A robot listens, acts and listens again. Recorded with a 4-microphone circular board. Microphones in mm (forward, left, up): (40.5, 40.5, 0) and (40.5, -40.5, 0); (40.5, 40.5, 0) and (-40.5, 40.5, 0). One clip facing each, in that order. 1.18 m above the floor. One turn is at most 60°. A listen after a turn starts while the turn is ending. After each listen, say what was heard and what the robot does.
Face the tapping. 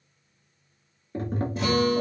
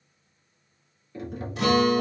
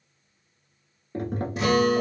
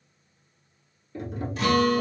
The tapping: 40° left. Turn 40° left.
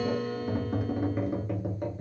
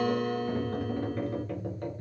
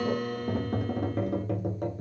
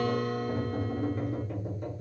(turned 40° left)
The tapping is now 15° left. Turn 15° left.
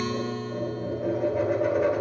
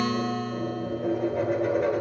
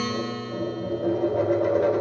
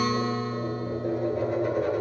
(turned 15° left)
Found it: tapping, straight ahead.